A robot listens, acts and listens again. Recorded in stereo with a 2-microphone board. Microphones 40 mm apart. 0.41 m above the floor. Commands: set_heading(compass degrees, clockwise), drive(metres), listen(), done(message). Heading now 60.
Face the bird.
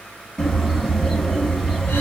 set_heading(30)
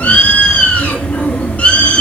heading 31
set_heading(251)
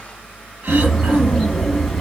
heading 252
done("Facing the bird.")